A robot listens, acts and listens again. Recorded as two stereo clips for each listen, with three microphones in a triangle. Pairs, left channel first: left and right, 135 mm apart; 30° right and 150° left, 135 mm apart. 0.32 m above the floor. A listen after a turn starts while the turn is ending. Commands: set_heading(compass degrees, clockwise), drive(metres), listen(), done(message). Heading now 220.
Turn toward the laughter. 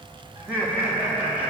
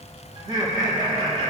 set_heading(25)
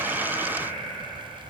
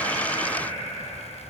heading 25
set_heading(50)
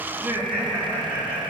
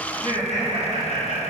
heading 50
set_heading(65)
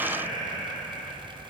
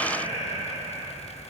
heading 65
set_heading(75)
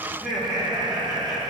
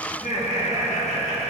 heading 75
done("Found it: laughter, straight ahead, over 4 m away.")